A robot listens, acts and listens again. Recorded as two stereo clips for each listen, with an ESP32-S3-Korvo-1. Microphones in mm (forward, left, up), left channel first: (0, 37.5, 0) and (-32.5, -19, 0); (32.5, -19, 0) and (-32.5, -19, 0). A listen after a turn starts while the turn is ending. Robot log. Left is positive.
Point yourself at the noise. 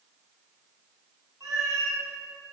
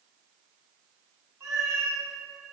note: The cat meowing: 140° right.
cmd yaw -140
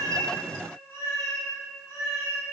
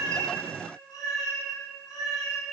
note: The cat meowing is now 10° left.
cmd yaw +10
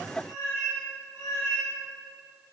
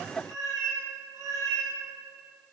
end: Facing the cat meowing.